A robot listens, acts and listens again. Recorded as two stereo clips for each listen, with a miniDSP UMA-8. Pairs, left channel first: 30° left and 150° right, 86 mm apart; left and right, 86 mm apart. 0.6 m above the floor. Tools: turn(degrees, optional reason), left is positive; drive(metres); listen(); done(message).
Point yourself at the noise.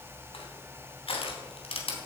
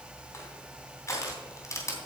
turn(degrees=35, reason="The crushing: 35° left.")
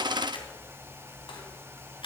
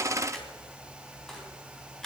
done("Facing the crushing.")